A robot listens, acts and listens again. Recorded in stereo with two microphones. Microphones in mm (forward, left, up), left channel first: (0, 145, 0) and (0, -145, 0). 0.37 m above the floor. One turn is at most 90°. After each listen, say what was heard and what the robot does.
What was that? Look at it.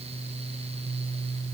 Keep listening.
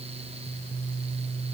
Keep listening.
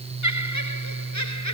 Turn 90° left.
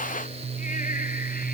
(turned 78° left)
Nothing new. It was at 10° left. Turn 10° left.
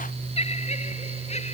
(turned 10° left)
The laughter is now 20° left. Turn 20° left.
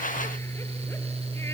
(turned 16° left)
Keep listening.
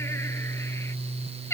The laughter is now 10° left. Turn 10° left.
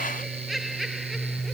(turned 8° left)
Found it: laughter, straight ahead.